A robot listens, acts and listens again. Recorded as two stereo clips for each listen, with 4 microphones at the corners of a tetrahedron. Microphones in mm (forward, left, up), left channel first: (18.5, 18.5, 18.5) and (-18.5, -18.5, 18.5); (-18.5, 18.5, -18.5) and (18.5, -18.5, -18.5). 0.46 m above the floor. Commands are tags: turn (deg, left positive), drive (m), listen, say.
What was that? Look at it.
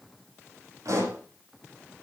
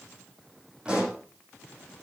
<turn deg="-115"/>
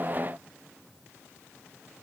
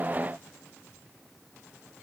<say>Facing where the pop came from. I can't hear it now.</say>